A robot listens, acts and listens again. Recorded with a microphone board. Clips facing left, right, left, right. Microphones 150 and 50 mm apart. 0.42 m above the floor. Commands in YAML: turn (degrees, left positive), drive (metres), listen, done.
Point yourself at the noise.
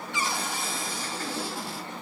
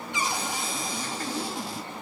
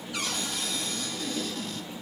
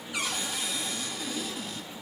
turn: -15
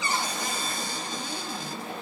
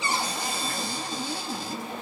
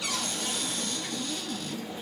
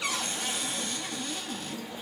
turn: -150
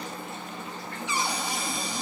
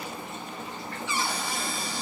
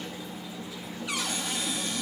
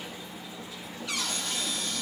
turn: 20
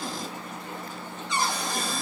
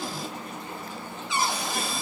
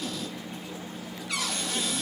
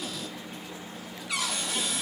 done: "Facing the cupboard door, 1 to 2 m away."